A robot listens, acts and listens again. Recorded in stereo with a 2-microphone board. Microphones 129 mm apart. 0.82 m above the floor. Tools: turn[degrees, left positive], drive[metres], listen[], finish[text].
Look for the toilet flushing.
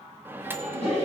Thought: The toilet flushing: about 55° left or 125° left.
Action: turn[55]
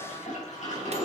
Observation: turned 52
Thought: So it is at 75° left.
Action: turn[75]
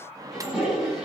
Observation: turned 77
Action: finish[Facing the toilet flushing.]